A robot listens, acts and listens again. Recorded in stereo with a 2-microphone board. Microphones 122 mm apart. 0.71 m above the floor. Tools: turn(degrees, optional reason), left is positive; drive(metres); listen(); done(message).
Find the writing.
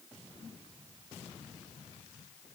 listen()
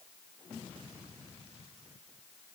listen()
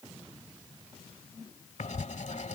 turn(degrees=90)
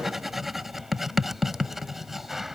done("Facing the writing.")